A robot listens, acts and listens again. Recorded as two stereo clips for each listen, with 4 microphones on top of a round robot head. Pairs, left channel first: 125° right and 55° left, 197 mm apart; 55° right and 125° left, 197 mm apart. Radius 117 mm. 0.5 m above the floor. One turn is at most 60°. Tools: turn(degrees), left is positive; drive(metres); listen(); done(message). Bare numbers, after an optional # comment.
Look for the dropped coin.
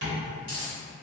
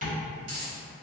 # The dropped coin: 120° left.
turn(60)
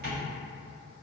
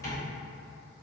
# Nothing new. It was at 60° left.
turn(60)
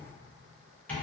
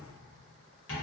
done("I heard a dropped coin from this way, but can't make it out now.")